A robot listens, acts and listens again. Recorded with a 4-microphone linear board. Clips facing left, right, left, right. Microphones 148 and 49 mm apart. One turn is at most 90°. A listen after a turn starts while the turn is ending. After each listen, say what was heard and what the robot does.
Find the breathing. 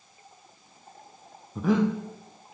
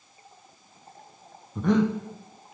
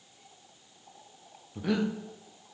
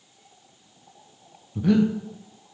Turn 30° left.
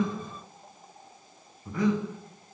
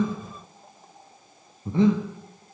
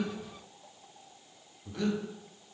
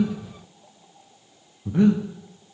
So it is at 25° right. Turn 25° right.
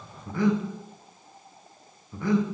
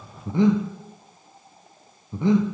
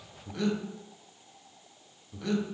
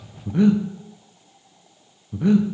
The breathing is now 20° right. Turn 20° right.
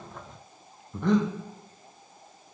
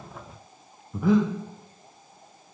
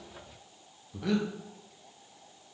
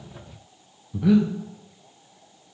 Found it: breathing, straight ahead, under 1 m away.